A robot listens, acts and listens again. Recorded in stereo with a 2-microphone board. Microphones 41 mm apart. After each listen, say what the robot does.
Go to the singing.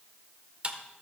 Keep listening.
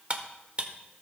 Keep listening.
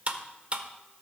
I can't make out singing, only cutlery clinking.